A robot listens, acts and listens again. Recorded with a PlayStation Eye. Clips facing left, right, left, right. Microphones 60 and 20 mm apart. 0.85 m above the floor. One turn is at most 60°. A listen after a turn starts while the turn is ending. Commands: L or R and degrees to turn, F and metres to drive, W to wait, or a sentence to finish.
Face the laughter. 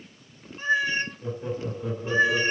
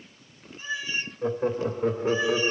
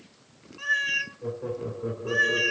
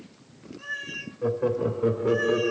R50
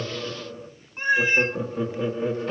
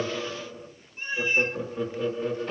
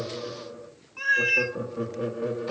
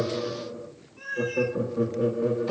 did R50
L20
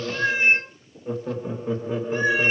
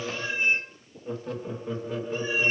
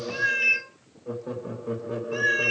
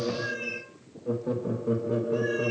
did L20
L25
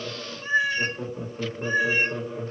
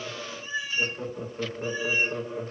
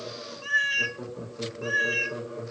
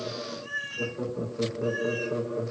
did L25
Found it: laughter, straight ahead, 1 to 2 m away.